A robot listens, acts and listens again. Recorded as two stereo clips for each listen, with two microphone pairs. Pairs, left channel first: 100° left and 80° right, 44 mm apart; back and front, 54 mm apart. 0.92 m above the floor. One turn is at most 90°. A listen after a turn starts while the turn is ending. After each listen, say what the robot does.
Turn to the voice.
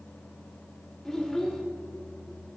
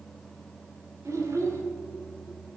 Turn 20° left.
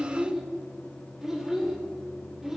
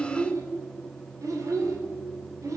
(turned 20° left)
Found it: a child speaking, straight ahead, 2 to 4 m away.